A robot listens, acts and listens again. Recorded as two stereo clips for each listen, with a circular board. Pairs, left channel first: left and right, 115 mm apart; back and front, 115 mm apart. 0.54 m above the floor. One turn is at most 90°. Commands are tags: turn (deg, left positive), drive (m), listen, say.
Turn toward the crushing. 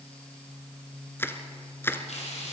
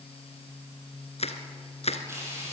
<turn deg="90"/>
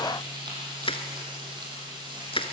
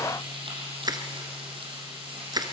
<turn deg="55"/>
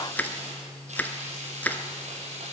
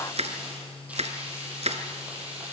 <turn deg="15"/>
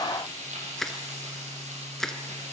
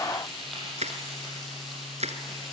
<say>Facing the crushing.</say>